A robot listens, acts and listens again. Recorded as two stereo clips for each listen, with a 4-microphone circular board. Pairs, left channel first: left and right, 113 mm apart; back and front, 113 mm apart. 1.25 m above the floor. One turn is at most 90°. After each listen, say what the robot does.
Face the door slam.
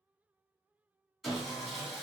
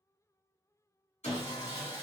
Keep listening.
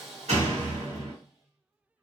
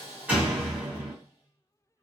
Turn 80° right.
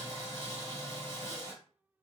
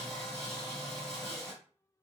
Facing where the door slam came from. I can't hear it now.